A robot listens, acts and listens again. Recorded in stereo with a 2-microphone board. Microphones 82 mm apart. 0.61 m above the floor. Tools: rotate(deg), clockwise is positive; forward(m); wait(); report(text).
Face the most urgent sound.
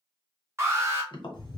rotate(30)
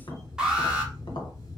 rotate(10)
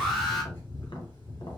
report("Facing the alarm.")